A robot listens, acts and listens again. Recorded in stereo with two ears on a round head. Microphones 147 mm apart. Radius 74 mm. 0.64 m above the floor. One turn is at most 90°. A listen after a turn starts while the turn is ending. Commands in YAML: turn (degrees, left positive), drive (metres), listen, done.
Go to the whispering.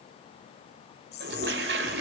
turn: 70
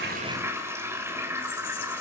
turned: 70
listen: true
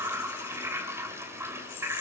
listen: true
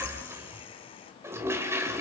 done: "I heard whispering, but can't make it out now. It was about straight ahead or 40° left. I did not reach it."